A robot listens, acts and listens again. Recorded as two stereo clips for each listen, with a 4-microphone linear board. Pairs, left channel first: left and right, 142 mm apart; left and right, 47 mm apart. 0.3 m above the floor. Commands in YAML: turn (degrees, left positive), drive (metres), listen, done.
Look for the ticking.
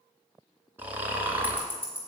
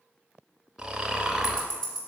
turn: 15
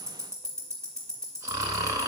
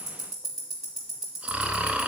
done: "Found it: ticking, straight ahead."